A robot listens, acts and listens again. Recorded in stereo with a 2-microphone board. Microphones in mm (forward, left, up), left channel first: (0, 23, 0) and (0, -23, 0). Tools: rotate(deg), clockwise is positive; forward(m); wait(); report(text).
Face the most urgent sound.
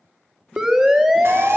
rotate(15)
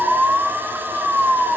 rotate(145)
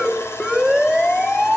report("Facing the siren.")